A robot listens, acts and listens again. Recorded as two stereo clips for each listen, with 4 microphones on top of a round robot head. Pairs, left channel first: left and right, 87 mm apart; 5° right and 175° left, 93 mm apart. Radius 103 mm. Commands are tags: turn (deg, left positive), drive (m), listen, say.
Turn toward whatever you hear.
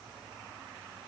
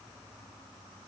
<listen/>
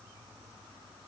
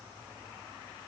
<listen/>
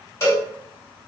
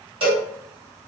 <turn deg="145"/>
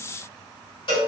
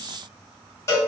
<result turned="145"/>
<turn deg="55"/>
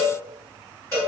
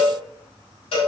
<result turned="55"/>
<turn deg="20"/>
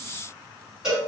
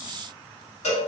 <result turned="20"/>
<turn deg="-10"/>
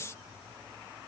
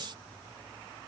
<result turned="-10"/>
<listen/>
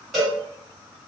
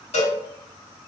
<say>Found it: a cowbell, straight ahead, 1 to 2 m away.</say>